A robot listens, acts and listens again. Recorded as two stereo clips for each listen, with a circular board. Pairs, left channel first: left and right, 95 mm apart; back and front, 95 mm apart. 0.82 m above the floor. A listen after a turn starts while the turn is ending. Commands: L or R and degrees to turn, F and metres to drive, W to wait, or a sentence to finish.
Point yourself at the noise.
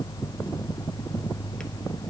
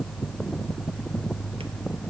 W
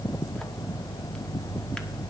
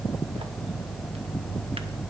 W
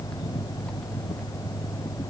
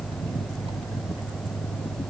I can't make out anything to turn to.